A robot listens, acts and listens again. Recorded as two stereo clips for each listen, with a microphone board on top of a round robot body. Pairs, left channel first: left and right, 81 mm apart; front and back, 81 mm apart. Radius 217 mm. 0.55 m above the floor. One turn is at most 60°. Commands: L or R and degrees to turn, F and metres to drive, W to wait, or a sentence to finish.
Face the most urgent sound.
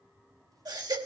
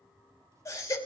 R55
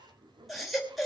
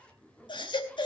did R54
Facing the baby crying.